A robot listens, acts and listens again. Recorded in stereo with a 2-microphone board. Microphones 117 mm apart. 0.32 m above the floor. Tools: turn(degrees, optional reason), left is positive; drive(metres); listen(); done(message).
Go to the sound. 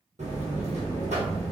turn(degrees=-90)
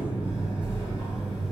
turn(degrees=-10, reason="So it is at 10° right.")
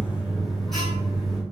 drive(metres=1.0)
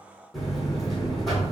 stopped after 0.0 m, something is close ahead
done("Blocked. The buzzer is further on, straight ahead.")